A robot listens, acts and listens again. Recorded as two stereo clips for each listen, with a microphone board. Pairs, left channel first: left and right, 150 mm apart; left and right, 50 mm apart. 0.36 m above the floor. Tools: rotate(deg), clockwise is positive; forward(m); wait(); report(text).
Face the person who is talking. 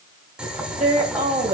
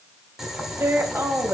rotate(55)
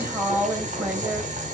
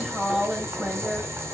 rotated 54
rotate(15)
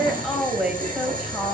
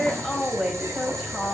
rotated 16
report("Found it: a woman speaking, straight ahead.")